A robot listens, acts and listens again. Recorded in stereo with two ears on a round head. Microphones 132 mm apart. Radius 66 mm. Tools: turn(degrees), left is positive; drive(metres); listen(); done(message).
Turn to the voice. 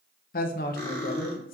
turn(degrees=60)
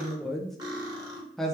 done("Facing the woman speaking, under 1 m away.")